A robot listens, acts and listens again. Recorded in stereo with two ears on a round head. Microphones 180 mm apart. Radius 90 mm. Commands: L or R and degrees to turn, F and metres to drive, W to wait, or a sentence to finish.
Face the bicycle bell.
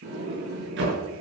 W
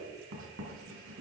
W
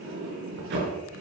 I can't make out a bicycle bell, only writing and a sliding door.